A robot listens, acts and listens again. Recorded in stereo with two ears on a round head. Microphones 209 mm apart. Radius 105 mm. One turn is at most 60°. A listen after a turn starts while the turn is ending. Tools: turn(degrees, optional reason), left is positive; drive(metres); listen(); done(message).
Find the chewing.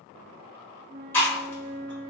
turn(degrees=30)
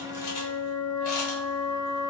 listen()
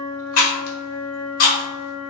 turn(degrees=60, reason="So it is at 140° left.")
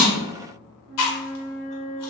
turn(degrees=60, reason="The chewing is now 85° left.")
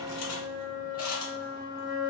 turn(degrees=25, reason="Nothing new. It was at 25° left.")
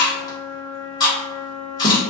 turn(degrees=15, reason="The chewing is now 15° left.")
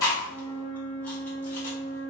listen()
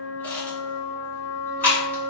turn(degrees=10, reason="The chewing is now 10° left.")
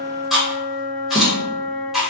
done("Found it: chewing, straight ahead.")